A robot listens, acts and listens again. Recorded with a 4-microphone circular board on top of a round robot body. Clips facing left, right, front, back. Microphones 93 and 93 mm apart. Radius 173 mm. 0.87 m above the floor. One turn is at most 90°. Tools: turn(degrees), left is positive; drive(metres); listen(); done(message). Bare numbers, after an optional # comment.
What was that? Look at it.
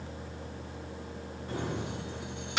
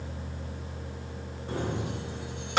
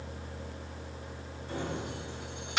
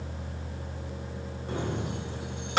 # The keys jangling: 130° right.
turn(-90)
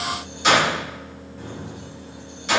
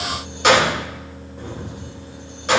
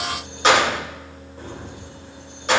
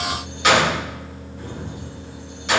# The keys jangling is now 45° right.
turn(-45)
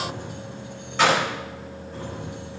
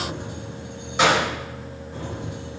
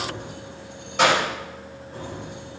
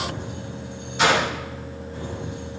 # The keys jangling is now 15° right.
turn(-15)
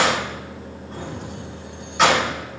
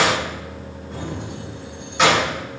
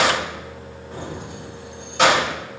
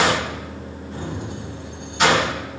done("Found it: keys jangling, straight ahead.")